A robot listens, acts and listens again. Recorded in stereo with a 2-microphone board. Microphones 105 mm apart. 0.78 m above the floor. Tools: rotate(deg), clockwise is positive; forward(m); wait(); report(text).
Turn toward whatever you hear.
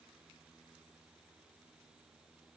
wait()
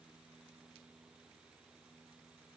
wait()
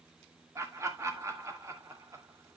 rotate(30)
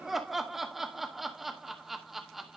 report("Facing the laughter.")